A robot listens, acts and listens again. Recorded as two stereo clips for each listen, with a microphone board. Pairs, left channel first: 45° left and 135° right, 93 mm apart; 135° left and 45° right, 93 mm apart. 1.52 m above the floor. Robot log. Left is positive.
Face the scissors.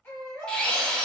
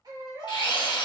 cmd idle
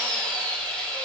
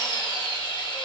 cmd idle
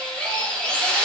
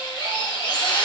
end: I can't make out scissors to turn to.